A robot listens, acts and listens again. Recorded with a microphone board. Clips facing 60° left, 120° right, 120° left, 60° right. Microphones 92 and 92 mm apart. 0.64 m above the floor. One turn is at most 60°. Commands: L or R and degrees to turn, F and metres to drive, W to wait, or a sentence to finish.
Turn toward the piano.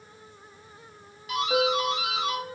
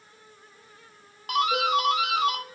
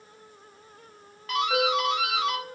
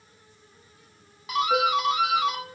L30
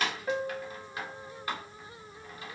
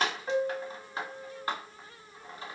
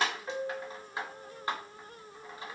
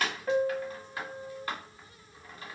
R10
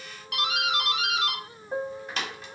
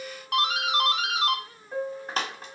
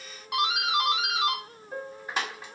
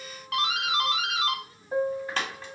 Found it: a piano, straight ahead.